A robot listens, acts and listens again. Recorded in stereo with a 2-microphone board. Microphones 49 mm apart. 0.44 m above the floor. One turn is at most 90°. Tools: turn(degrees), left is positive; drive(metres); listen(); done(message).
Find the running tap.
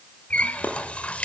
turn(degrees=25)
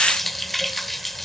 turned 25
done("Found it: a running tap, straight ahead, under 1 m away.")